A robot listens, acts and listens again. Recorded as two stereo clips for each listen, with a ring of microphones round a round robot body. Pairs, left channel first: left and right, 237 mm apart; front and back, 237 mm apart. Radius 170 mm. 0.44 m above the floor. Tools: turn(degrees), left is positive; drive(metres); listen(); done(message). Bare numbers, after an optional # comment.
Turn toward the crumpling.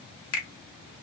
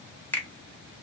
listen()
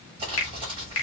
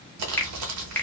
# The crumpling: 165° right.
turn(-165)
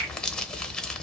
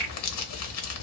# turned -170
done("Found it: crumpling, straight ahead, under 1 m away.")